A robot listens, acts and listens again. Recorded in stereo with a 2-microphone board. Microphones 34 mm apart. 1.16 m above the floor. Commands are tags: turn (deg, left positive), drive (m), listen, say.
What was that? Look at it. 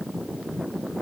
<listen/>
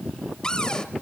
<turn deg="20"/>
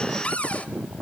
<turn deg="135"/>
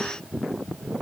<listen/>
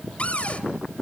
<turn deg="40"/>
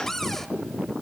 <turn deg="10"/>
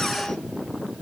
<listen/>
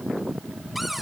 <say>Found it: a cupboard door, straight ahead.</say>